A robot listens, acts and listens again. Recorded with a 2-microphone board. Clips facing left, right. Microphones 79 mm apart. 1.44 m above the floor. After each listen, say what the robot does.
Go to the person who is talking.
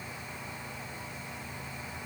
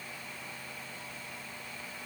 Keep listening.
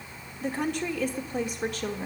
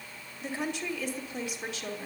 Turn 50° left.
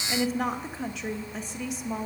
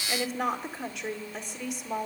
Drive 1.0 m forward.
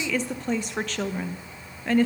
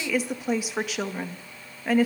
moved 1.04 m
Turn 10° right.
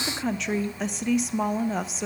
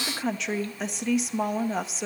Drive 1.0 m forward.
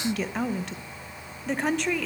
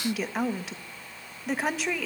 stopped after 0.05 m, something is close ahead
I am next to the woman speaking.